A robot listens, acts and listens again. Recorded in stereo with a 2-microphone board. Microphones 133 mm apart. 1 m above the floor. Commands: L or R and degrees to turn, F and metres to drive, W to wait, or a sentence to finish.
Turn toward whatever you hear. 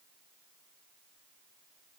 W
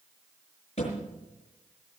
L50
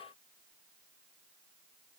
W
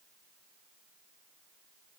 I heard a thud, but can't make it out now. It was about straight ahead or 80° left.